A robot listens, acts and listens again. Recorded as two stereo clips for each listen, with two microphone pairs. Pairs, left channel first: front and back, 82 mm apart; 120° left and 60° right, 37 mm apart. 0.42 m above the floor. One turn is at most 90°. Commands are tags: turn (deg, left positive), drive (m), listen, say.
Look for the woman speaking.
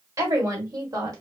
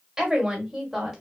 <turn deg="-90"/>
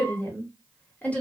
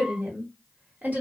<turn deg="-65"/>
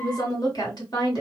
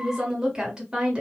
<say>Found it: a woman speaking, straight ahead.</say>